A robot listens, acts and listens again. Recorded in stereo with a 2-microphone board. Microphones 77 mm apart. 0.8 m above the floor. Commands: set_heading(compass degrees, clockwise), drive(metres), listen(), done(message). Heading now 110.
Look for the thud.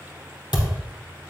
set_heading(35)
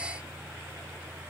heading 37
listen()
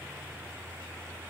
done("I heard a thud, but can't make it out now. It was about straight ahead or 35° left.")